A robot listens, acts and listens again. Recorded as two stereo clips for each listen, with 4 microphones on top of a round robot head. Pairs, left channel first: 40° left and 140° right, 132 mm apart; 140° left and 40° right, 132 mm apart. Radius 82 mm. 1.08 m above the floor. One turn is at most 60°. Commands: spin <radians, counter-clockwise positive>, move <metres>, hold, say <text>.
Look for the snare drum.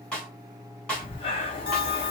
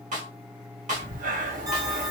spin -0.70
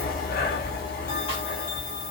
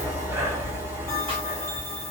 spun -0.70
hold
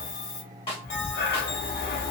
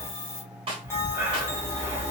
say Facing the snare drum.